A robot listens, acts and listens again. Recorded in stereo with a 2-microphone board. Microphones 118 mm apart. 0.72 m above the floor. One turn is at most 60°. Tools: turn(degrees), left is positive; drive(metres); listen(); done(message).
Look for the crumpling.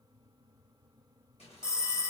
listen()
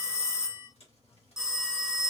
turn(degrees=60)
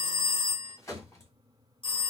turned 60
turn(degrees=30)
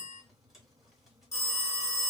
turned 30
listen()
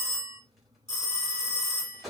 done("Found it: crumpling, straight ahead.")